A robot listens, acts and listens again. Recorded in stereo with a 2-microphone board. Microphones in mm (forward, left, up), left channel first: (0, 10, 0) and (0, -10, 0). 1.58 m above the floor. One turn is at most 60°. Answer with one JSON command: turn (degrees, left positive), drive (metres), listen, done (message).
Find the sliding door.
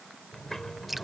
{"turn": 30}
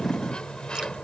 {"turn": 60}
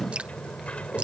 {"turn": 60}
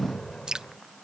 {"turn": 30}
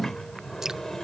{"turn": 20}
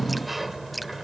{"done": "Found it: a sliding door, straight ahead."}